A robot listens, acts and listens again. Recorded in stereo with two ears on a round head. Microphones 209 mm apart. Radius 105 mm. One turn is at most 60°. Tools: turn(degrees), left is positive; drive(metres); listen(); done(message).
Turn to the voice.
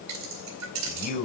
turn(degrees=35)
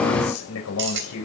turn(degrees=60)
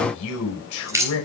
turn(degrees=60)
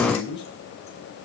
turn(degrees=20)
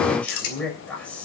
done("Facing the man speaking.")